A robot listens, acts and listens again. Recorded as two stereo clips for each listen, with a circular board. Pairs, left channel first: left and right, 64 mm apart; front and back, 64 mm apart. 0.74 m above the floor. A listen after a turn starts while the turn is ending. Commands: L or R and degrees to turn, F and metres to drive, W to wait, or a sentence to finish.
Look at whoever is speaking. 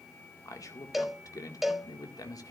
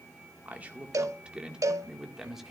L95
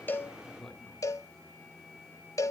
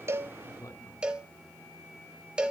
L10
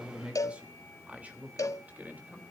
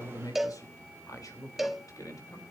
R25
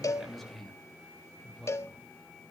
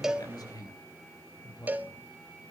Found it: a man speaking, straight ahead.